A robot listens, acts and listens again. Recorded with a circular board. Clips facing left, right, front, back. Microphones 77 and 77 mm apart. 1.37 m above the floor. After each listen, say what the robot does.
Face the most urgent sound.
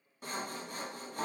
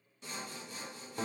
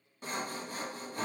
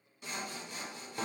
Keep listening.
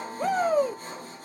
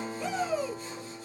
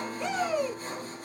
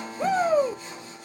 Turn 130° left.
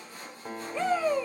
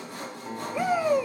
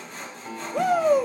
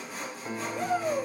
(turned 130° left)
Turn 15° right.
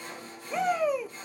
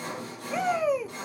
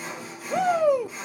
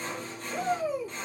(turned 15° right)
Facing the shout, under 1 m away.